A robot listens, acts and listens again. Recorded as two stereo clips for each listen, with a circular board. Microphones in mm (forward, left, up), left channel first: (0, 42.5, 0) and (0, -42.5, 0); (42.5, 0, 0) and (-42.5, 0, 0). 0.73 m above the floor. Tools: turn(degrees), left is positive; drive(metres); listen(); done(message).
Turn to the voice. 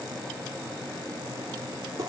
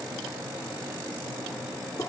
listen()
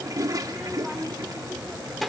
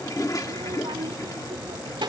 turn(degrees=180)
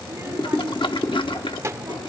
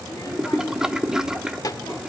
turn(degrees=-40)
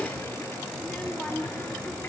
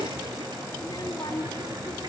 turn(degrees=15)
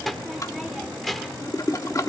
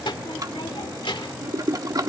done("Facing the child speaking.")